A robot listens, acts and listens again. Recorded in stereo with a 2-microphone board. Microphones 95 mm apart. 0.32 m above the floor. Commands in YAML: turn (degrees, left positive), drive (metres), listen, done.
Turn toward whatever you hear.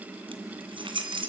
turn: -60
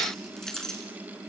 done: "Found it: keys jangling, straight ahead."